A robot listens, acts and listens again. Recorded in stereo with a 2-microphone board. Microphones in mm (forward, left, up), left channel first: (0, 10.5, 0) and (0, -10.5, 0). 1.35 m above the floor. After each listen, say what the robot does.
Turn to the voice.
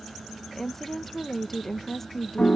Turn 30° left.
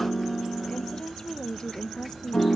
Turn 135° left.
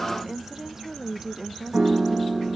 Turn 15° right.
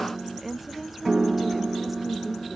Facing the woman speaking.